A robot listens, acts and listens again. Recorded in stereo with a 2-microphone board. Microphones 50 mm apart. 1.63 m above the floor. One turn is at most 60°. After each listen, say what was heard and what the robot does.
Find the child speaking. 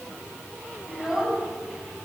Turn 30° right.
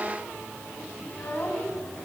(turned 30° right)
So it is at 35° left. Turn 35° left.
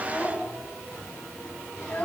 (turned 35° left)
The child speaking is now 25° left. Turn 25° left.
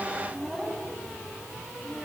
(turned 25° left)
Facing the child speaking, over 4 m away.